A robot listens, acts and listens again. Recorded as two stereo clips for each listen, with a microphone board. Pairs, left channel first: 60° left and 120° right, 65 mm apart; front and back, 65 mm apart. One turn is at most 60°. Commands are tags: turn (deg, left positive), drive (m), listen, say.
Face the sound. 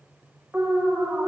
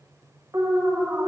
<turn deg="60"/>
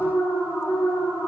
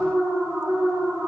<turn deg="60"/>
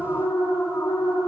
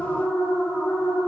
<turn deg="60"/>
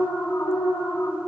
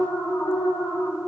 <turn deg="20"/>
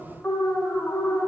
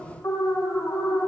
<say>Found it: an alarm, straight ahead, 1 to 2 m away.</say>